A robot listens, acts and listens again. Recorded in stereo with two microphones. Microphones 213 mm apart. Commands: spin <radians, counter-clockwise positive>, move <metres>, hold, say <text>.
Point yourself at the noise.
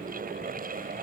hold
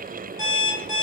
spin 0.61
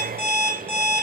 say Facing the alarm clock, 1 to 2 m away.